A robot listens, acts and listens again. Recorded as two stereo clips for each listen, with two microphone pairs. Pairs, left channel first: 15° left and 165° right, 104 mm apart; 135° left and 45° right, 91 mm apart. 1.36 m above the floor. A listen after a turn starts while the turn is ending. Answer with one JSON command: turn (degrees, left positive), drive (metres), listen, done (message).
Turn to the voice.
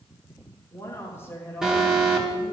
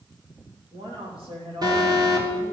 {"turn": -55}
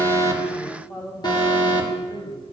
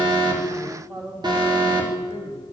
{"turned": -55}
{"turn": -25}
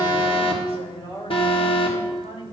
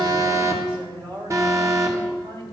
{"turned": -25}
{"turn": -15}
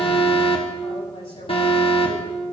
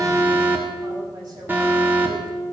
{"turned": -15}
{"done": "Facing the woman speaking, 2 to 4 m away."}